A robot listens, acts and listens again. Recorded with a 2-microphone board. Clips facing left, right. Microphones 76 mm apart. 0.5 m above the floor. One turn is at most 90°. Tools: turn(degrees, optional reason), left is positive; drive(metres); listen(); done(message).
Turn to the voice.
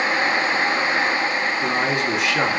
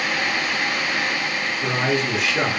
turn(degrees=35, reason="The man speaking: about 35° left or 145° left.")
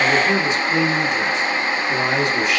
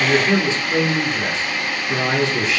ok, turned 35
done("Found it: a man speaking, straight ahead.")